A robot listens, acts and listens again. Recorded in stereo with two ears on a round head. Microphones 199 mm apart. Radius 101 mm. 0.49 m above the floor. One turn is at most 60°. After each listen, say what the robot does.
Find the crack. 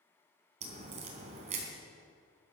Turn 30° right.
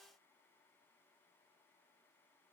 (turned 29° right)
Keep listening.
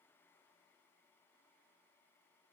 I heard a crack, but can't make it out now. It was about straight ahead or 120° right.